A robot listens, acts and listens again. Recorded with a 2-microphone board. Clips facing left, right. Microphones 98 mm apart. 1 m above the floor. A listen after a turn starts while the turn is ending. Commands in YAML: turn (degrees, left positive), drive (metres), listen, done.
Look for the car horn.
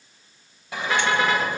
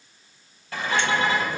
turn: 70
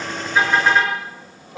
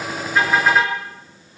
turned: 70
done: "Found it: a car horn, straight ahead."